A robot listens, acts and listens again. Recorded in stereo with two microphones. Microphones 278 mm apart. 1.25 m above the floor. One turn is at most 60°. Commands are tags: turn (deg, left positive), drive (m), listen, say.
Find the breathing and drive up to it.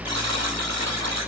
<listen/>
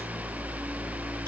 <listen/>
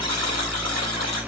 <say>I can't make out breathing, only a buzzer.</say>